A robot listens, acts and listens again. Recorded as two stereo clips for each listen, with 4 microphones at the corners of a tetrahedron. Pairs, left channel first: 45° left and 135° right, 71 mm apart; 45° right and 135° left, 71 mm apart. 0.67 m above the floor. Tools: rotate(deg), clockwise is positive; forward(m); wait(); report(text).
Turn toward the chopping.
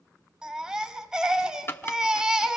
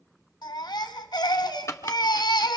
report("Facing the chopping.")